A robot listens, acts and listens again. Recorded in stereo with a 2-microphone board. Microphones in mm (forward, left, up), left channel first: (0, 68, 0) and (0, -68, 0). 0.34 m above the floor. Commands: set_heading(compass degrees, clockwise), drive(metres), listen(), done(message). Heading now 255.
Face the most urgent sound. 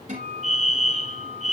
set_heading(200)
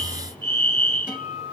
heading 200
set_heading(180)
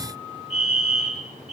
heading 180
done("Found it: a fire alarm, straight ahead.")